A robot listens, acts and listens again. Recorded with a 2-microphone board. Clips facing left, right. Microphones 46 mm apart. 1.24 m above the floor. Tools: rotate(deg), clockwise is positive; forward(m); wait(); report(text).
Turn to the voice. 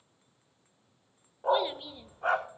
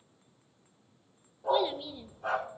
rotate(-30)
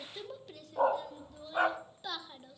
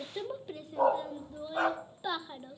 rotate(20)
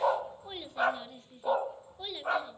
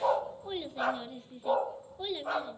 report("Facing the child speaking, under 1 m away.")